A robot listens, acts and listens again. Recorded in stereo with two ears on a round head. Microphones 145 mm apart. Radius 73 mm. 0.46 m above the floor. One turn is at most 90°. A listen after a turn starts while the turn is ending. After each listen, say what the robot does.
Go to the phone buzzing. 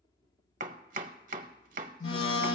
Turn 75° left.
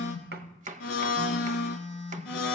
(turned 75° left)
Turn 10° left.
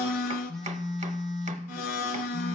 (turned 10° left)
Drive 1.0 m forward.
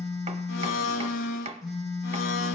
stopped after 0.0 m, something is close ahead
Blocked. The phone buzzing is further on, straight ahead.